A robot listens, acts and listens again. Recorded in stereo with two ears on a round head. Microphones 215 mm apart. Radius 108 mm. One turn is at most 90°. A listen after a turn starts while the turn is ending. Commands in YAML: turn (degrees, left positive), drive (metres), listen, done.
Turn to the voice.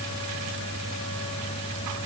listen: true
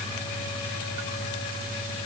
listen: true
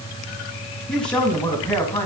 turn: 30
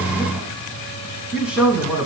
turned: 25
turn: -30
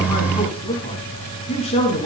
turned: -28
turn: 25
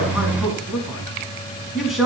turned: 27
done: "Facing the man speaking."